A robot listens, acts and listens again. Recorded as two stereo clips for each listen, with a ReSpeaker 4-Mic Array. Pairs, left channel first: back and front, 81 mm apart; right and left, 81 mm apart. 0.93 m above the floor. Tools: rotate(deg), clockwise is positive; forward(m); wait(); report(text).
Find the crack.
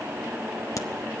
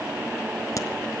rotate(135)
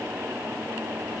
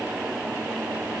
report("I heard a crack from this way, but can't make it out now.")